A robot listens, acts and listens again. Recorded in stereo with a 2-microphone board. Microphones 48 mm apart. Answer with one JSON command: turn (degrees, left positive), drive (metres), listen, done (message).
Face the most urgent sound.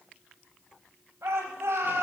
{"turn": -90}
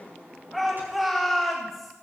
{"done": "Facing the shout."}